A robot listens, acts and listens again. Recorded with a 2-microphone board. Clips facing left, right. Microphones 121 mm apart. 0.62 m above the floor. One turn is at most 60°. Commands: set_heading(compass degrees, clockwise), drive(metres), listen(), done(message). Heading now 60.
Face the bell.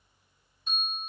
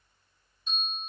set_heading(5)
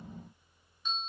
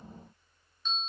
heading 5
set_heading(350)
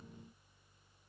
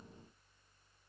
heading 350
listen()
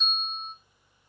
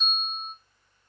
done("Facing the bell.")